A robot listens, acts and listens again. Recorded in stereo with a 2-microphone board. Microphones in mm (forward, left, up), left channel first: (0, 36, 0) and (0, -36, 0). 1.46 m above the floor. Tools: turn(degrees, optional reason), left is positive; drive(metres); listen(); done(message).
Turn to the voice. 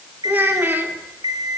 turn(degrees=-30, reason="The child speaking: about 30° right or 150° right.")
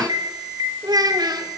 turn(degrees=-105, reason="So it is at 105° right.")
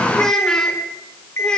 turn(degrees=15, reason="The child speaking is now 15° left.")
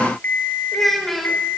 done("Facing the child speaking, over 4 m away.")